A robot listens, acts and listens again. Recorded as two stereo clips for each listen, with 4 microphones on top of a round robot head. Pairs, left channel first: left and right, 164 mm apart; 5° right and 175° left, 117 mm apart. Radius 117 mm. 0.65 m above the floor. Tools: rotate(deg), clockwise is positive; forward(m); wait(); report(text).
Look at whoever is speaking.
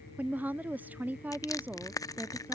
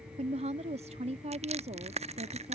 rotate(170)
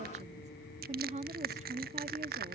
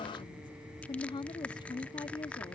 rotate(50)
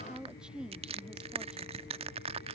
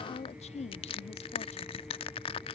report("Found it: a woman speaking, straight ahead.")